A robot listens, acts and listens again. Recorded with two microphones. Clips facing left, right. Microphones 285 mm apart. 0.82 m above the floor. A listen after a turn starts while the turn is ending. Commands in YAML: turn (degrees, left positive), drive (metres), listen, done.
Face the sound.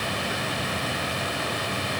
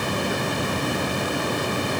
listen: true
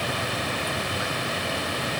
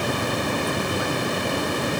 listen: true
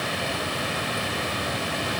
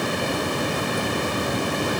done: "I can't make out anything."